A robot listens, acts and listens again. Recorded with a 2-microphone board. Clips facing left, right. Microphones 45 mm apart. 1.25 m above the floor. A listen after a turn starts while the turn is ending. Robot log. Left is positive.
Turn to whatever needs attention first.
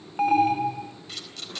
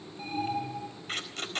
cmd yaw +90
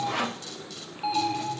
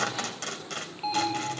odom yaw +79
end: Found it: an alarm, straight ahead, 2 to 4 m away.